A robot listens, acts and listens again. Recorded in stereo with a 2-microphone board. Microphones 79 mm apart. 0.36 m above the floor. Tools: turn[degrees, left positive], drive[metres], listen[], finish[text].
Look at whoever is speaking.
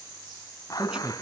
Action: turn[-30]
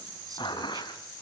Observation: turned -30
Action: listen[]
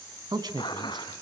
Thought: So it is at 120° right.
Action: turn[-120]
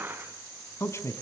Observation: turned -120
Thought: The man speaking is now 35° left.
Action: turn[35]
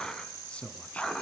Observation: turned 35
Thought: The man speaking is now 15° left.
Action: turn[15]
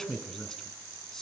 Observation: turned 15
Action: finish[Found it: a man speaking, straight ahead, 2 to 4 m away.]